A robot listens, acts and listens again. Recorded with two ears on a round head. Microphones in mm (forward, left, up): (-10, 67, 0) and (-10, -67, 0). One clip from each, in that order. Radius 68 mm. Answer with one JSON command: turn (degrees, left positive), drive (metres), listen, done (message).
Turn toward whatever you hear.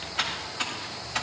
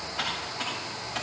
{"turn": 40}
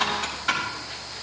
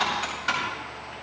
{"done": "Found it: typing on a keyboard, straight ahead, over 4 m away."}